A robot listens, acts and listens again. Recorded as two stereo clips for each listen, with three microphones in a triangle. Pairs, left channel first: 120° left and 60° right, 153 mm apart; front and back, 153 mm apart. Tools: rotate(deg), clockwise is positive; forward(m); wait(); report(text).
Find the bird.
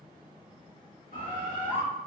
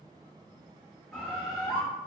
rotate(85)
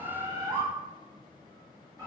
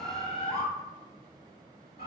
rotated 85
report("Found it: a bird, straight ahead.")